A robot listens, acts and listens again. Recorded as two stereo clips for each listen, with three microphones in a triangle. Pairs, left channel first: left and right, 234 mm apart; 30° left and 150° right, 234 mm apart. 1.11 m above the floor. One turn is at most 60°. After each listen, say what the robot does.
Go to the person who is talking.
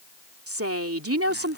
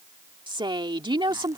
Turn 60° right.
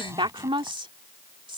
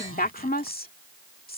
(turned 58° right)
Turn 20° right.
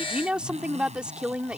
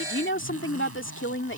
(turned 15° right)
Drive 1.0 m forward.
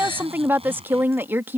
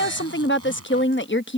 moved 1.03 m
Turn 10° right.
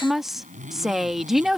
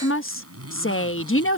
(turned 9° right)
Drive 1.0 m forward.
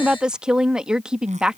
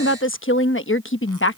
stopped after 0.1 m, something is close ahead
I am next to the woman speaking.